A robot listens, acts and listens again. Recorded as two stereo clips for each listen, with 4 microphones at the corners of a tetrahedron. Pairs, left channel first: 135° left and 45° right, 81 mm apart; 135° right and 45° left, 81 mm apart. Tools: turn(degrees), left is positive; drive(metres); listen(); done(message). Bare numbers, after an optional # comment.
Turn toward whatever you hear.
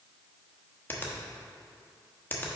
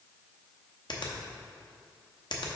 # The finger snap: 160° right.
turn(-160)
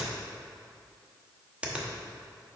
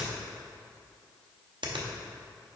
# The finger snap is now 30° left.
turn(30)
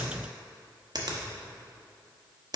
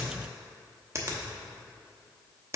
# The finger snap is now 10° right.
turn(-10)
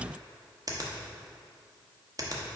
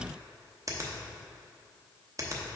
done("Found it: a finger snap, straight ahead, under 1 m away.")